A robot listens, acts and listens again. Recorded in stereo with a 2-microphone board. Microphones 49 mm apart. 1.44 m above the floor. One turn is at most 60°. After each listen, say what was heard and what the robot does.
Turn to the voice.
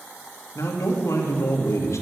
The man speaking: about 75° left or 105° left. Turn 60° left.
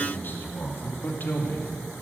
So it is at 45° left. Turn 45° left.
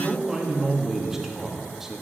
Found it: a man speaking, straight ahead.